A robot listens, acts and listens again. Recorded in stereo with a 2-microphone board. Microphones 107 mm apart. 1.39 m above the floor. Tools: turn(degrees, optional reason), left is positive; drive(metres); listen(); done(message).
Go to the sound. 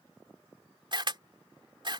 turn(degrees=-50, reason="The camera shutter: about 50° right or 130° right.")
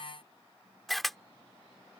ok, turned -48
drive(metres=1.0)
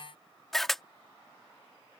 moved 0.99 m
drive(metres=1.0)
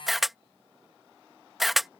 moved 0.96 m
drive(metres=1.0)
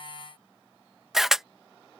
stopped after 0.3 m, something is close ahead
done("I am next to the camera shutter.")